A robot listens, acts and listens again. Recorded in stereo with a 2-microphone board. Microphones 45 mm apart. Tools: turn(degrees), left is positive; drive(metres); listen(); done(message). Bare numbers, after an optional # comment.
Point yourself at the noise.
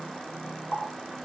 # The running tap: about 45° left or 135° left.
turn(45)
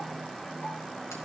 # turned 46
listen()
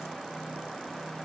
listen()
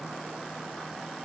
done("I heard a running tap, but can't make it out now. It was about straight ahead or 85° left.")